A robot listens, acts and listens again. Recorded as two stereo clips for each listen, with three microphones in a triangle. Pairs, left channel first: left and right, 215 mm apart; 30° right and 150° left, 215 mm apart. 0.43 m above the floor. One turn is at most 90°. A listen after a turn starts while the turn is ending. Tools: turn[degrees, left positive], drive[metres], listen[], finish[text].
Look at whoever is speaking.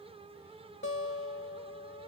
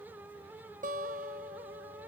Action: listen[]
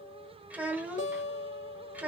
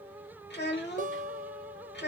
Thought: The child speaking: 10° right.
Action: turn[-10]
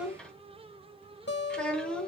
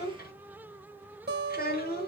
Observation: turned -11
Action: finish[Facing the child speaking, under 1 m away.]